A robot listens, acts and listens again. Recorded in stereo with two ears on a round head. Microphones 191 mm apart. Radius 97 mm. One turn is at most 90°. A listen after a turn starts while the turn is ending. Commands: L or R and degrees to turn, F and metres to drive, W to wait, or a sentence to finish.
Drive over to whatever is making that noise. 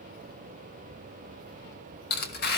L50
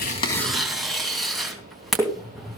F1.0
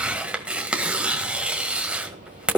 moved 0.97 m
F1.0
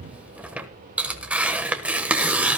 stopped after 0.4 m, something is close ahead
Arrived at the tearing paper, straight ahead.